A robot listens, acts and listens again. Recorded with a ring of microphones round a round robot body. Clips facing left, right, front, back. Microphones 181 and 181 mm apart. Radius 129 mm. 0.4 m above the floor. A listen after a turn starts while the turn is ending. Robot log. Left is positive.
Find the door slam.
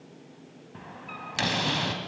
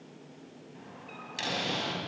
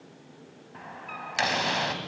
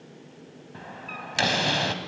note: The door slam: 130° left.
cmd yaw +130
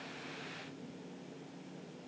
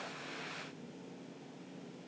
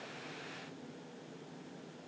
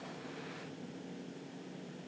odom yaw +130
end: I heard a door slam from this way, but can't make it out now.